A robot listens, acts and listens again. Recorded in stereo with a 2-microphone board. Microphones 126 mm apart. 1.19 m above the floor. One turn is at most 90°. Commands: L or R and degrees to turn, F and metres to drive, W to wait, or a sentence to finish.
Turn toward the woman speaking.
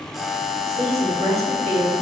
R55
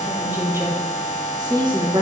R35
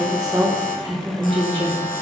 R45
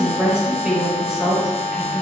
Facing the woman speaking.